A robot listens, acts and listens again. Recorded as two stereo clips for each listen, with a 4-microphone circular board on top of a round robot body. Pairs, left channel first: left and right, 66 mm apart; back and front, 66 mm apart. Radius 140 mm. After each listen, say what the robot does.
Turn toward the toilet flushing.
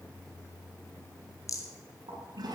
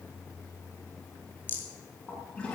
Turn 100° right.
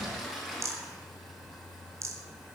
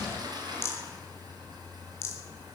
Facing the toilet flushing, over 4 m away.